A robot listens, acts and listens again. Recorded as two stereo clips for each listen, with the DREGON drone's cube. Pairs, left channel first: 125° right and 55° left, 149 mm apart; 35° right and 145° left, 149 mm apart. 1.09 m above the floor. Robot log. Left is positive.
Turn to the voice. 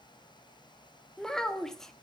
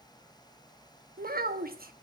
note: The child speaking: 150° left.
cmd yaw +150
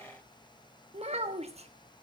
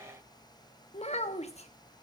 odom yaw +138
note: The child speaking is now 10° left.
cmd yaw +10
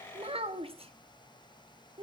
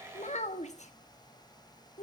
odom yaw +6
end: Facing the child speaking.